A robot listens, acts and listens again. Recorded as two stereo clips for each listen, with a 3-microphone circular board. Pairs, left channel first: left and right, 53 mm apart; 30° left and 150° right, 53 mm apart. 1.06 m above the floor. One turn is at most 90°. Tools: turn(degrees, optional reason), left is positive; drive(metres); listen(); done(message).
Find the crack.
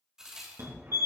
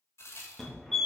turn(degrees=-10, reason="The crack: 10° right.")
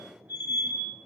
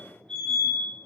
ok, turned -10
done("I heard a crack from this way, but can't make it out now.")